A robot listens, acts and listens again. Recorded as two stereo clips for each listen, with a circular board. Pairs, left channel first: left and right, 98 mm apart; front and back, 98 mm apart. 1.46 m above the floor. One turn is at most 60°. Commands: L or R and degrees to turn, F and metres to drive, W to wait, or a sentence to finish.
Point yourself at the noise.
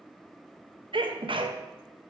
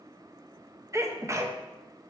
R60
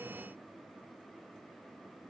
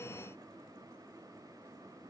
R60
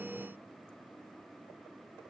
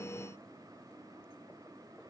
Facing where the sneeze came from. I can't hear it now.